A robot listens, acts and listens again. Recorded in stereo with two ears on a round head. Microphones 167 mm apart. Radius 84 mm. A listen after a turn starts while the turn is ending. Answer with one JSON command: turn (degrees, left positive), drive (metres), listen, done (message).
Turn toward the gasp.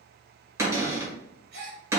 {"turn": -60}
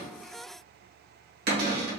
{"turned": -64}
{"listen": true}
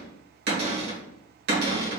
{"done": "I heard a gasp, but can't make it out now. It was about 5° left or 55° right."}